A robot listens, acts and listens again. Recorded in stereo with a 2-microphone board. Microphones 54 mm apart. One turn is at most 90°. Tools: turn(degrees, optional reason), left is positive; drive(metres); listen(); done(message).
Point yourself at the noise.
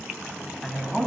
turn(degrees=30)
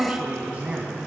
turn(degrees=-25, reason="So it is at 25° right.")
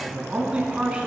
turn(degrees=-20, reason="The man speaking is now 20° right.")
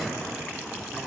listen()
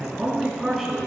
done("Facing the man speaking, over 4 m away.")